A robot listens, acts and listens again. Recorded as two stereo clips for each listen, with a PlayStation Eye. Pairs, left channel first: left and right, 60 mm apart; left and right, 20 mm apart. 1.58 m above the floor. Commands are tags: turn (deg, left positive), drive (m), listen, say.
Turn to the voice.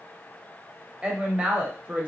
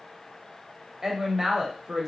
<turn deg="-20"/>
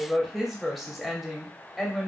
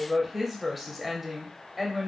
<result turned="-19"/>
<say>Facing the woman speaking, under 1 m away.</say>